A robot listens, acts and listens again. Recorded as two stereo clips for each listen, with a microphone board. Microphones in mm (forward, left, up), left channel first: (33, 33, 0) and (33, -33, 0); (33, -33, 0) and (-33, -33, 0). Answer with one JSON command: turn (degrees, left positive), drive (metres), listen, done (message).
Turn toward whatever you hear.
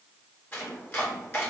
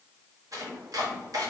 {"turn": 150}
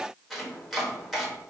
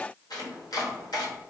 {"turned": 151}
{"done": "Facing the chopping."}